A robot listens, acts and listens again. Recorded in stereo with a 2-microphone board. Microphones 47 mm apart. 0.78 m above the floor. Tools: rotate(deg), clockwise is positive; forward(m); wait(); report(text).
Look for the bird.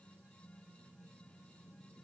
wait()
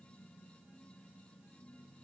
wait()
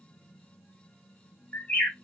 rotate(-35)
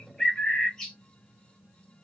rotate(-10)
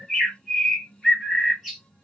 report("Facing the bird, 1 to 2 m away.")